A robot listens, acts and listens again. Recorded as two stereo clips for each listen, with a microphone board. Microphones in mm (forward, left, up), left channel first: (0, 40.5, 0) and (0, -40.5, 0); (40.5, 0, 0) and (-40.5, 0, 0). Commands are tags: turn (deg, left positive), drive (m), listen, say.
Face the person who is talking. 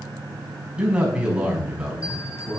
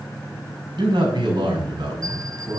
<turn deg="-165"/>
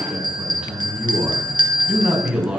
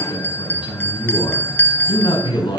<turn deg="-10"/>
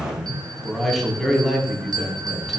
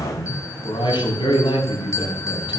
<say>Facing the man speaking.</say>